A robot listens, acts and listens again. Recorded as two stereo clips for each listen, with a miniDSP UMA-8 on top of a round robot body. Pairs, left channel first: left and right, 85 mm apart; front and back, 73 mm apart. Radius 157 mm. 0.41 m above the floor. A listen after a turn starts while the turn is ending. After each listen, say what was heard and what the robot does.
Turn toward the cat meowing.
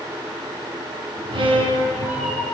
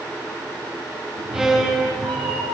The cat meowing: 165° right. Turn 165° right.
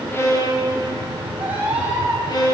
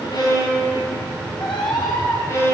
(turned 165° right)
The cat meowing is now 20° right. Turn 20° right.
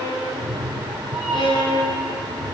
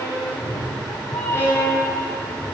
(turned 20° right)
Facing the cat meowing, over 4 m away.